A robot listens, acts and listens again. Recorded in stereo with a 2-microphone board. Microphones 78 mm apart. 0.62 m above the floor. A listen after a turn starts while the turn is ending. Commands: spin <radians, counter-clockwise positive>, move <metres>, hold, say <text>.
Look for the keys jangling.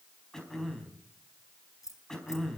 spin 0.79
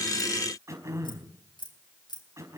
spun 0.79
spin 2.01
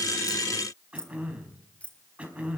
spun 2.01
spin 0.26
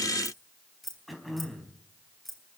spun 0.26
say Facing the keys jangling.